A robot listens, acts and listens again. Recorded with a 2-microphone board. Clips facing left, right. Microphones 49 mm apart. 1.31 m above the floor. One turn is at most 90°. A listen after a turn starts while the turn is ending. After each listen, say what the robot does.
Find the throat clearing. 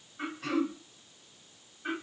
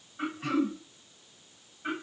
Turn 30° right.
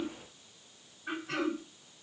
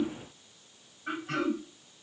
Turn 90° right.
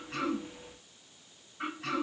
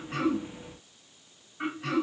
Turn 10° right.
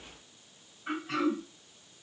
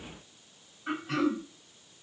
Facing the throat clearing, 1 to 2 m away.